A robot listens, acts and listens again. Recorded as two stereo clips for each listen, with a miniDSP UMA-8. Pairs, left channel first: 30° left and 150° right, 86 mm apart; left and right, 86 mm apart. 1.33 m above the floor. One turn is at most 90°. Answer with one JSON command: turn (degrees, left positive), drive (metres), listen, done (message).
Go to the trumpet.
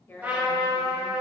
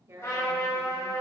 {"turn": 90}
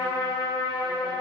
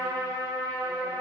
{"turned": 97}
{"turn": 45}
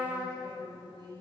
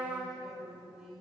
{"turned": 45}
{"drive": 1.0}
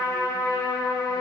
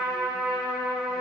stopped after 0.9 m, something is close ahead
{"done": "Arrived at the trumpet, straight ahead."}